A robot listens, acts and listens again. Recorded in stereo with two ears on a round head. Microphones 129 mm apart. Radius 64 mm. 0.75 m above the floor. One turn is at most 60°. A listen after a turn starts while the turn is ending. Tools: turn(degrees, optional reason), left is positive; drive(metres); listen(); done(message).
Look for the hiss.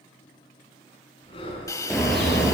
turn(degrees=25, reason="The hiss: about 25° left or 155° left.")
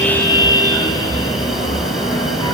listen()
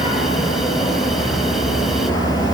listen()
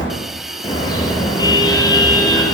done("I heard a hiss, but can't make it out now. It was about straight ahead or 130° left.")